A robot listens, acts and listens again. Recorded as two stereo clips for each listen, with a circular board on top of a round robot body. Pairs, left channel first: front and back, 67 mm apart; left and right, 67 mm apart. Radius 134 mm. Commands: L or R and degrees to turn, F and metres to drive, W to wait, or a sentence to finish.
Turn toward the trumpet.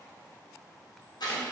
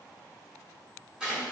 W
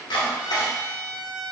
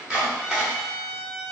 R100
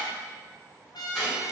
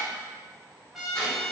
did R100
Found it: a trumpet, straight ahead, under 1 m away.